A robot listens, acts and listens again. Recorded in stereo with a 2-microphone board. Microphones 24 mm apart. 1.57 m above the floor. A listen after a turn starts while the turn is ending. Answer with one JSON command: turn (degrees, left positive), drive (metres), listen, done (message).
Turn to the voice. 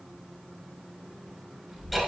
{"turn": -25}
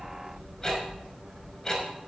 {"turn": -135}
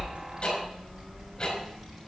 {"done": "Facing the child speaking, over 4 m away."}